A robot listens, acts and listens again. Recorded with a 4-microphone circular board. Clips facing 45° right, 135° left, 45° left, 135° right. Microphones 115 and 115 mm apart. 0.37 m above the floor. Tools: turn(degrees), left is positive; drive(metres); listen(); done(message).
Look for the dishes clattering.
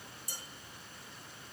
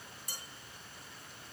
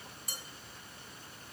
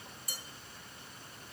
turn(degrees=110)
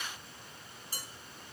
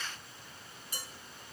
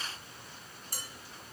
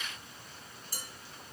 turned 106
done("Found it: dishes clattering, straight ahead, 2 to 4 m away.")